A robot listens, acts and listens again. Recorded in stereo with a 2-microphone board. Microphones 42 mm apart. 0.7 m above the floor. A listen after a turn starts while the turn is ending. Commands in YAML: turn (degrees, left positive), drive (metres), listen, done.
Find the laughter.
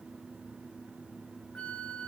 listen: true
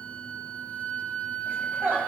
turn: -45
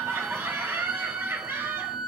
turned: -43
turn: -105
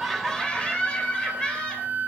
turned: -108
turn: 25
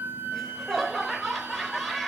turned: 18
done: "Found it: laughter, straight ahead, 2 to 4 m away."